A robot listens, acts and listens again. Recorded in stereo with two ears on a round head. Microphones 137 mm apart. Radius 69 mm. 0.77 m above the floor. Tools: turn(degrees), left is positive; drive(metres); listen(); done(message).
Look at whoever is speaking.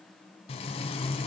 listen()
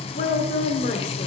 turn(degrees=55)
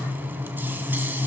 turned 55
listen()
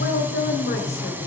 turn(degrees=65)
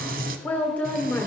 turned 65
turn(degrees=10)
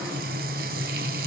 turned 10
listen()
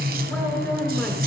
listen()
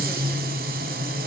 done("Facing where the woman speaking came from. I can't hear it now.")